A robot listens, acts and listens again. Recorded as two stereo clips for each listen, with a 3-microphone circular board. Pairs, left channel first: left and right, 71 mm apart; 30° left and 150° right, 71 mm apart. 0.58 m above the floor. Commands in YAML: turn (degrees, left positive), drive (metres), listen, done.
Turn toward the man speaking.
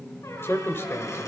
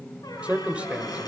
turn: 140
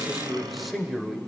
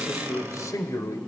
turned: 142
done: "Found it: a man speaking, straight ahead."